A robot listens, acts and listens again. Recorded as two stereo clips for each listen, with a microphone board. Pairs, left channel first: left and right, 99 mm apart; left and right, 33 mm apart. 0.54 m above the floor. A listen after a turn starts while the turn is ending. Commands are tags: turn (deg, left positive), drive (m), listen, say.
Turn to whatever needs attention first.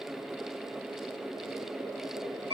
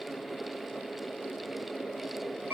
<listen/>
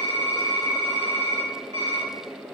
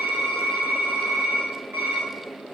<listen/>
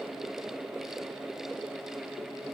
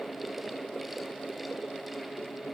<say>I can't make out anything urgent, only typing on a keyboard.</say>